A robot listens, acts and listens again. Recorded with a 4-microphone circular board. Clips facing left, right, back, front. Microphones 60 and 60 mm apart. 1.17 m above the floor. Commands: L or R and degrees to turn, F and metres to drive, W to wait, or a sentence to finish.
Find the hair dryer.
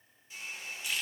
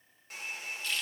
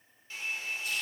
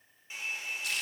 R70
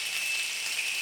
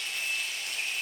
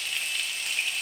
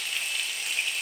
W
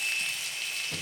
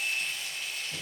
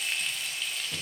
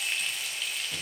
W
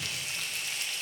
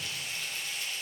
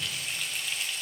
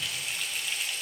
I heard a hair dryer from this way, but can't make it out now.